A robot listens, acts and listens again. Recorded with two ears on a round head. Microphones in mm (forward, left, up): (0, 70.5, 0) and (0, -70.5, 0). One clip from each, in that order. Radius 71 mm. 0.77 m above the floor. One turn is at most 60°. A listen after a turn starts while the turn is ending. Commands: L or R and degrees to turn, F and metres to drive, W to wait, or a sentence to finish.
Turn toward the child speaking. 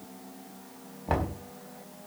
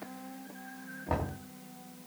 W
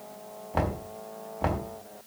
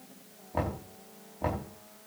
W
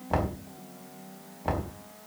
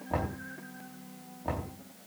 I can't make out a child speaking, only knocking.